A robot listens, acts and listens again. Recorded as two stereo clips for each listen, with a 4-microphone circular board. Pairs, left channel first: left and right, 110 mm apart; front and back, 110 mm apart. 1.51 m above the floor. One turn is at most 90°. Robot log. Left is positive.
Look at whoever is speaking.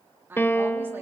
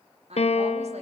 note: The woman speaking: 160° right.
cmd yaw -90
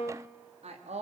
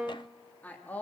note: The woman speaking is now 75° right.
cmd yaw -75
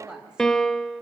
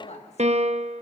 end: Facing the woman speaking.